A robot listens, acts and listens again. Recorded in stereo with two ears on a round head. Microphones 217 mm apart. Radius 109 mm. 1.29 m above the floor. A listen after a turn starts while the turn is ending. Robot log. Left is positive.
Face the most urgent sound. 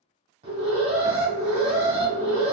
note: The alarm: about 25° right or 155° right.
cmd yaw -25
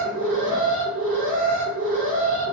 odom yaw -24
end: Found it: an alarm, straight ahead.